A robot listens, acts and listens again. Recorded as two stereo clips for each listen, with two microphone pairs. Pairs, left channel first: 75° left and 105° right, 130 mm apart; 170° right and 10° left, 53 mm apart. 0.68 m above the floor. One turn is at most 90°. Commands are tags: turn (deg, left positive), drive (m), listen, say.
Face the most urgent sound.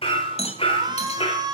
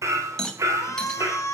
<turn deg="-90"/>
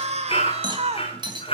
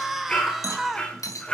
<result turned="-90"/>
<turn deg="-75"/>
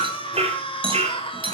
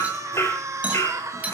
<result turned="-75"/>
<turn deg="30"/>
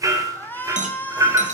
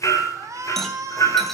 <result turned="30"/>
<say>Found it: a shout, straight ahead.</say>